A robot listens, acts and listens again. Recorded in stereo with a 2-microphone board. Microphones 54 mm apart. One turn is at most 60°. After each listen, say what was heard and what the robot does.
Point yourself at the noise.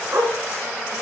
The dog barking: about 70° right or 110° right. Turn 60° right.
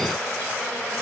Keep listening.
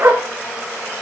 So it is at 50° right. Turn 50° right.
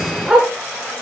The dog barking is now 10° right. Turn 10° right.
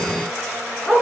Facing the dog barking.